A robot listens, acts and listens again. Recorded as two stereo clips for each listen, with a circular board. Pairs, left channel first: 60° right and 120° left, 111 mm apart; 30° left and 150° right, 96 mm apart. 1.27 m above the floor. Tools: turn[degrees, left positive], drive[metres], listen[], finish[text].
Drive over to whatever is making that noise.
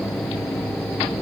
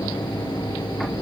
Action: listen[]
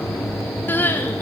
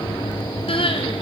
Thought: The crying: 15° left.
Action: turn[15]
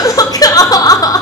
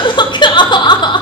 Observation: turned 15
Action: drive[1.0]
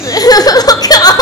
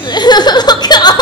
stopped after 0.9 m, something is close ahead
Thought: The crying is now 10° right.
Action: turn[-10]
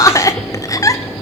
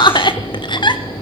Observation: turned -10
Action: finish[Arrived at the crying, straight ahead.]